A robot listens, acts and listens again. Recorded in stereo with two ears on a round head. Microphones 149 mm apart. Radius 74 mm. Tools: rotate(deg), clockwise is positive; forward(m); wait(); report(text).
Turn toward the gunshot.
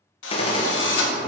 rotate(-35)
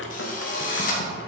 wait()
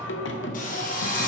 report("I heard a gunshot, but can't make it out now. It was about straight ahead or 110° left.")